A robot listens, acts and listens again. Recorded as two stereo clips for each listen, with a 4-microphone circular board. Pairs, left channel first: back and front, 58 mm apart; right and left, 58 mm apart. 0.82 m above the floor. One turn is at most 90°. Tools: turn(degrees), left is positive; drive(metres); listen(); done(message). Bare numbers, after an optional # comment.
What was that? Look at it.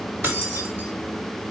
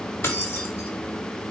# The keys jangling: 45° right.
turn(-45)
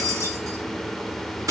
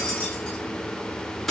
done("Found it: keys jangling, straight ahead.")